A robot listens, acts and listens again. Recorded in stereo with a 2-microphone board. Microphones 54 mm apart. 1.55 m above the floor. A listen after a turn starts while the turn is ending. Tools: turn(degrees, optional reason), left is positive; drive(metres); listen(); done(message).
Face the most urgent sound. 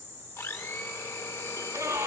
turn(degrees=-75, reason="The scream: about 75° right or 105° right.")
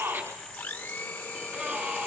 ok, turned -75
turn(degrees=-30, reason="So it is at 30° right.")
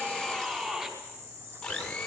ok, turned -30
turn(degrees=-15, reason="The scream is now 15° right.")
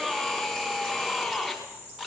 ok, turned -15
done("Found it: a scream, straight ahead, over 4 m away.")